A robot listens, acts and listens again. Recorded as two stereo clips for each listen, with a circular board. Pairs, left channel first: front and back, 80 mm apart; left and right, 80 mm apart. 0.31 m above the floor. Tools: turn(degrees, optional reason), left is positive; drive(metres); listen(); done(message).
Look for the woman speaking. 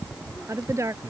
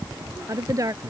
turn(degrees=-130, reason="The woman speaking: 130° right.")
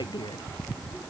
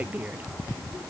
turn(degrees=-20, reason="The woman speaking is now 20° right.")
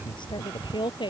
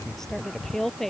done("Facing the woman speaking.")